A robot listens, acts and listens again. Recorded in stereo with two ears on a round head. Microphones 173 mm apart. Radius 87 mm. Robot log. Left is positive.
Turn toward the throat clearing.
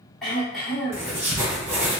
cmd yaw +30
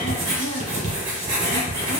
cmd idle
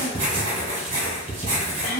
note: So it is at 150° left.
cmd yaw +150
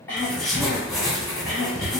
note: The throat clearing is now 15° left.
cmd yaw +15
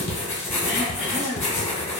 end: Facing the throat clearing, 1 to 2 m away.